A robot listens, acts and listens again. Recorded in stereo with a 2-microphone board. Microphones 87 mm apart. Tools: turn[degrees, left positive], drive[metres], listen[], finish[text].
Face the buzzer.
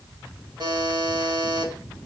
Thought: The buzzer: about 55° right or 125° right.
Action: turn[-55]
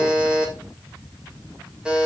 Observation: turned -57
Thought: So it is at 10° right.
Action: turn[-10]
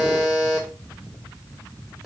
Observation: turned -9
Action: finish[Facing the buzzer, 1 to 2 m away.]